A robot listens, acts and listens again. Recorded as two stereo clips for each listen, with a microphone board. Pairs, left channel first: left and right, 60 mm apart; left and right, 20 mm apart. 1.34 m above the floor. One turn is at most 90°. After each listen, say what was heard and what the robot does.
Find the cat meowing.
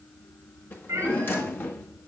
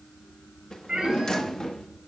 The cat meowing: about 60° right or 120° right. Turn 60° right.
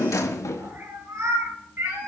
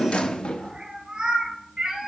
So it is at 65° right. Turn 65° right.
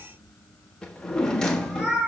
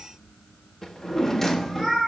The cat meowing is now 20° right. Turn 20° right.
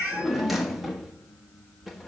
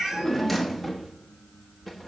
Found it: a cat meowing, straight ahead, over 4 m away.